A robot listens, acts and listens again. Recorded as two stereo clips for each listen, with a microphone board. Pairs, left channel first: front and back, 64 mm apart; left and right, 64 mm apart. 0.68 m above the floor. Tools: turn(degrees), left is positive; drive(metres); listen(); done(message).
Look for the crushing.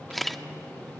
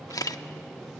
listen()
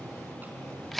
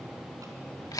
listen()
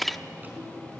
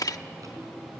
done("I can't make out crushing to turn to.")